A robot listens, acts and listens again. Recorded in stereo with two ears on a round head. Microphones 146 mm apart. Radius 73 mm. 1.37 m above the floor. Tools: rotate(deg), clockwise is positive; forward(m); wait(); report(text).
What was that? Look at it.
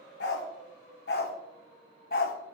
rotate(-60)
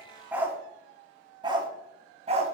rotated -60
rotate(40)
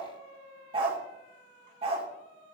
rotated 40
rotate(35)
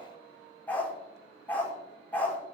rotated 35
rotate(-10)
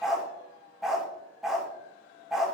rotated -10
report("Facing the dog barking.")